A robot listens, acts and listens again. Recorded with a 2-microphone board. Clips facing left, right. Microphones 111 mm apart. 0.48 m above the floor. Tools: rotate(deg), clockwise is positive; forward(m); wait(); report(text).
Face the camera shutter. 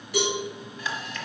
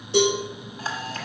rotate(45)
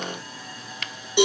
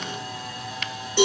rotate(90)
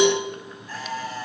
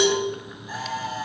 rotate(15)
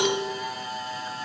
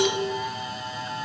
report("Facing the camera shutter, 1 to 2 m away.")